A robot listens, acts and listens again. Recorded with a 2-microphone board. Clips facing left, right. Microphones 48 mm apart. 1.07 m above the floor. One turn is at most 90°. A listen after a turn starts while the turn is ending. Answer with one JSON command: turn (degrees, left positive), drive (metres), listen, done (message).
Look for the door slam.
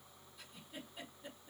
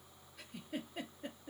{"listen": true}
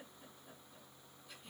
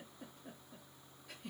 {"listen": true}
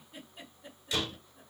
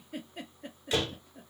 {"turn": -35}
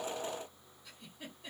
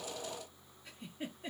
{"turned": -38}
{"listen": true}
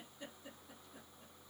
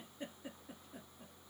{"done": "I heard a door slam, but can't make it out now. It was about 5° left or 105° right."}